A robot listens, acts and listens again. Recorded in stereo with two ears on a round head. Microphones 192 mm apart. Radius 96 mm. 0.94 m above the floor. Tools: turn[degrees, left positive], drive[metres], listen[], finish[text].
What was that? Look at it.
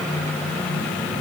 Action: listen[]
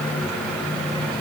Action: listen[]
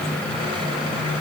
Action: finish[I can't make out anything to turn to.]